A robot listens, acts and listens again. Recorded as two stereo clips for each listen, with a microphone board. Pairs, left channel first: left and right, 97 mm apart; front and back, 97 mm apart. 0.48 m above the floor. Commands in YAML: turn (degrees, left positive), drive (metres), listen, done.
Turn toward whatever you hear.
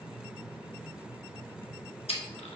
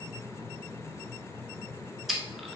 turn: 90
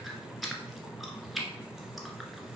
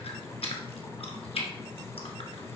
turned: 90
done: "Facing the chewing."